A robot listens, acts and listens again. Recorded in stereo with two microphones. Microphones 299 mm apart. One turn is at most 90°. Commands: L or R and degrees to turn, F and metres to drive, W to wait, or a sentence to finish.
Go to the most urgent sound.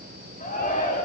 L25
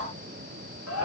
L90
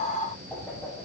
L35
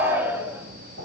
F1.0
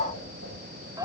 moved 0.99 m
R15
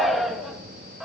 F1.0
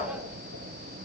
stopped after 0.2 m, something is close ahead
W
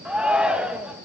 I am next to the shout.